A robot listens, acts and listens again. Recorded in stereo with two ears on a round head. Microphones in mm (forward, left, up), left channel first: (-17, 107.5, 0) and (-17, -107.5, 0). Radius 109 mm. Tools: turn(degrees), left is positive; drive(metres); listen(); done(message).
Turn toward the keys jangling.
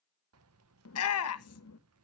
turn(degrees=-70)
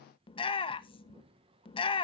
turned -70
turn(degrees=-25)
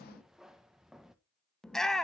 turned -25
done("Found it: keys jangling, straight ahead, under 1 m away.")